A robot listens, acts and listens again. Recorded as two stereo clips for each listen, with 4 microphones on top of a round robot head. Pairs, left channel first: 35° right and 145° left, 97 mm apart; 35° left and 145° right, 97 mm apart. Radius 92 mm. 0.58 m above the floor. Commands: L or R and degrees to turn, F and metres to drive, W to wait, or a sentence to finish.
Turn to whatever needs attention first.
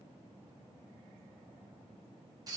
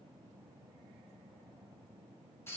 W
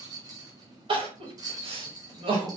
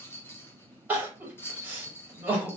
L145
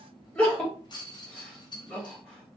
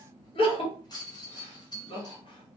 L45
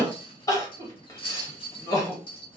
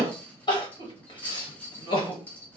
L10
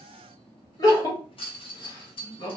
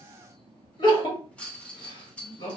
Found it: crying, straight ahead, 1 to 2 m away.